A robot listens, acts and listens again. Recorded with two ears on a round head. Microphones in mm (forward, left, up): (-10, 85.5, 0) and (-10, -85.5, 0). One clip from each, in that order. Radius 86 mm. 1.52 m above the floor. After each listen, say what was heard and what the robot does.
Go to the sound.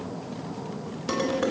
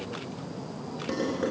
The dishes clattering: about 50° left or 130° left. Turn 50° left.
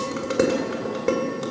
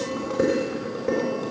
So it is at 80° left. Turn 80° left.
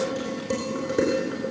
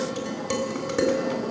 The dishes clattering is now 25° right. Turn 25° right.
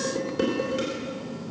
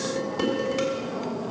The dishes clattering is now 10° right. Turn 10° right.
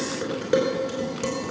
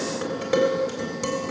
Drive 1.0 m forward.
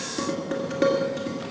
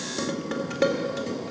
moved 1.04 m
Drive 1.0 m forward.
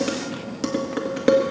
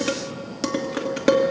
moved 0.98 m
The dishes clattering is now 15° right. Turn 15° right.
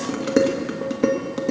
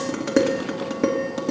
Drive 1.0 m forward.
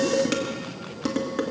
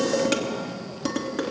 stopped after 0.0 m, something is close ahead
I am next to the dishes clattering.